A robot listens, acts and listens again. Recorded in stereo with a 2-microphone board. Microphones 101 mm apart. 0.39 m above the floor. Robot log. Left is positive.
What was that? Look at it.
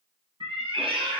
note: The cat meowing: about 70° right or 110° right.
cmd yaw -70
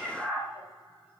note: So it is at 10° right.
cmd yaw -10
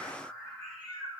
note: The cat meowing is now 10° right.
cmd yaw -10
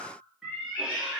end: Facing the cat meowing, 2 to 4 m away.